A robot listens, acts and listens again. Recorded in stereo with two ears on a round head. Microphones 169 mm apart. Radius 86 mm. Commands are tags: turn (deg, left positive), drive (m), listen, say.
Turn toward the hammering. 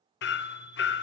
<turn deg="65"/>
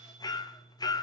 <turn deg="25"/>
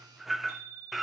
<say>Facing the hammering.</say>